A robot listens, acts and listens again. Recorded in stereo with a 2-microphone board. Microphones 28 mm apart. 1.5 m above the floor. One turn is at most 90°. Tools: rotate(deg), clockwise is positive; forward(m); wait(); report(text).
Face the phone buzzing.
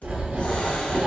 wait()
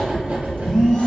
rotate(-35)
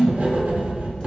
rotate(-90)
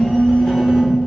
rotate(-40)
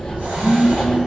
report("Facing the phone buzzing, under 1 m away.")